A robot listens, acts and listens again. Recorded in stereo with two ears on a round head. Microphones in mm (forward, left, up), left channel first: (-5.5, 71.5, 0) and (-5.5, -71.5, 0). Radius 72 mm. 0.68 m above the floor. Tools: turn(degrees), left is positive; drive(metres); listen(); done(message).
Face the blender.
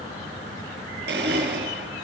turn(degrees=-75)
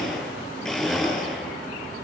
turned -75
done("Found it: a blender, straight ahead.")